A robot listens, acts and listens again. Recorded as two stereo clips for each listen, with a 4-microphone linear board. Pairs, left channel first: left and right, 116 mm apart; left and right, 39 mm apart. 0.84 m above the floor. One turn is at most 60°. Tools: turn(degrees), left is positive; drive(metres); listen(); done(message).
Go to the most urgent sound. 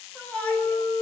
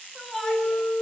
turn(degrees=30)
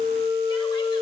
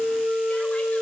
listen()
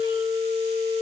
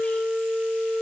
listen()
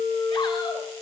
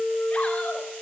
done("I heard a shout, but can't make it out now. It was about 20° right or 140° left. I did not reach it.")